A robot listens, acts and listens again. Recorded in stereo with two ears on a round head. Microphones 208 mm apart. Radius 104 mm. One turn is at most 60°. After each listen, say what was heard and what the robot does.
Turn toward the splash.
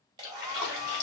The splash: about 65° left or 115° left. Turn 60° left.
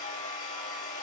Keep listening.
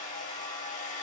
I heard a splash, but can't make it out now. It was about 5° left or 55° left.